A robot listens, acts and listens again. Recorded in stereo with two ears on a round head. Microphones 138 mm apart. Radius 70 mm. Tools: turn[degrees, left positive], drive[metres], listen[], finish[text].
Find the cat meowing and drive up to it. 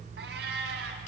Action: turn[-90]
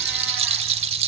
Action: listen[]
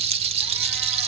Action: listen[]
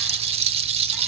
Action: finish[Facing where the cat meowing came from. I can't hear it now. I did not reach it.]